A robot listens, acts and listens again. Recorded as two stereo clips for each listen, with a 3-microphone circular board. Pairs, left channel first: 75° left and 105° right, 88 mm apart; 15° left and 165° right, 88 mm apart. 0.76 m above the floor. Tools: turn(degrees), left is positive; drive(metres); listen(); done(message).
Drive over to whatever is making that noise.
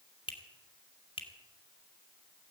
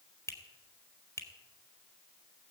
turn(degrees=70)
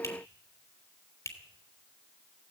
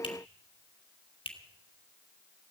turn(degrees=20)
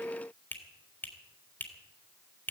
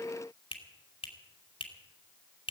drive(metres=1.0)
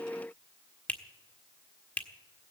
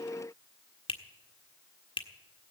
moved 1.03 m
drive(metres=1.0)
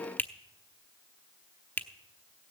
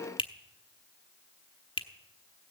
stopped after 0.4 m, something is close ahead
done("Arrived at the finger snap, straight ahead.")